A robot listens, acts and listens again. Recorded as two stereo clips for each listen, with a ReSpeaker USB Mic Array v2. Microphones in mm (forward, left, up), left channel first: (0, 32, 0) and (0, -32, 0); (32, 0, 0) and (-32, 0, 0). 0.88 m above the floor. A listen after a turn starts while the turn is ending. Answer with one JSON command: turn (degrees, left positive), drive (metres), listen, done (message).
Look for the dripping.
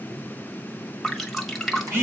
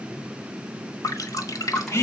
{"done": "Found it: dripping, straight ahead."}